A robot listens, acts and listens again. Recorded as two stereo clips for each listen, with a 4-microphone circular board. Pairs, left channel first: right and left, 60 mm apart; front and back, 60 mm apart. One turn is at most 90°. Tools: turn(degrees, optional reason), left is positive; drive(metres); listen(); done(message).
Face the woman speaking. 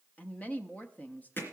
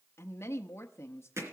turn(degrees=-30, reason="The woman speaking: 30° right.")
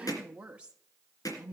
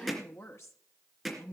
turn(degrees=25, reason="The woman speaking is now 25° left.")
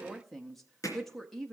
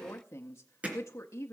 done("Found it: a woman speaking, straight ahead.")